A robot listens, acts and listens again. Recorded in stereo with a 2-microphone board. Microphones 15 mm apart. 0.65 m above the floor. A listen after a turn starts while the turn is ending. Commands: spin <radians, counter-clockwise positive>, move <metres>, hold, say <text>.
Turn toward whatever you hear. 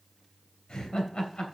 spin 1.57
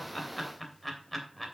say Found it: laughter, straight ahead.